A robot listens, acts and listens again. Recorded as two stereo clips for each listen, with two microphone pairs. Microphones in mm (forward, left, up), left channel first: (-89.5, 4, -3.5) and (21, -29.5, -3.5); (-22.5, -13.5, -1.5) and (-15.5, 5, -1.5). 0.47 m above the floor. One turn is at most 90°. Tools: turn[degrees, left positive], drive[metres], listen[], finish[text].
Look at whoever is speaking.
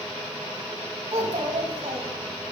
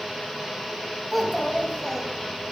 Thought: The child speaking: 15° right.
Action: turn[-15]
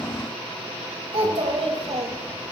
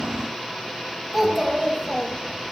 Action: finish[Found it: a child speaking, straight ahead.]